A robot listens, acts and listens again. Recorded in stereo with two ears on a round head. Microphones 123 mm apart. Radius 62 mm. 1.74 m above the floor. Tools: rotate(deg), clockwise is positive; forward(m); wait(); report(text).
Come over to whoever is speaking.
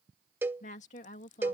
rotate(-55)
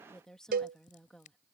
forward(1.0)
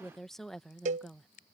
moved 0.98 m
forward(1.0)
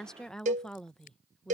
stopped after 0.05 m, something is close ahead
report("I am next to the woman speaking.")